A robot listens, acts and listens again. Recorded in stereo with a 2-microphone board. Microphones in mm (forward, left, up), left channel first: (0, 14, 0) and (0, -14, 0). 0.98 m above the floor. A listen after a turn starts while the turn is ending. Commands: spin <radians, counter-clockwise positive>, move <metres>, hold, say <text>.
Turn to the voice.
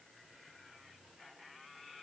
hold
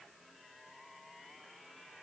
hold
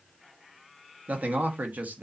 spin -1.57
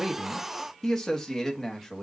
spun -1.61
spin 0.35
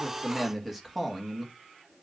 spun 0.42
say Found it: a man speaking, straight ahead, 1 to 2 m away.